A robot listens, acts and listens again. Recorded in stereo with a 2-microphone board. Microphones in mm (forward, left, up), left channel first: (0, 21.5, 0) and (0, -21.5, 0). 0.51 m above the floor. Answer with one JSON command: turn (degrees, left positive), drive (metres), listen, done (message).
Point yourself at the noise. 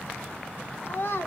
{"turn": 70}
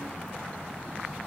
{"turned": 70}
{"listen": true}
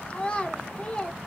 {"turn": 25}
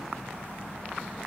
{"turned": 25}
{"listen": true}
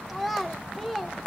{"done": "Facing the child speaking."}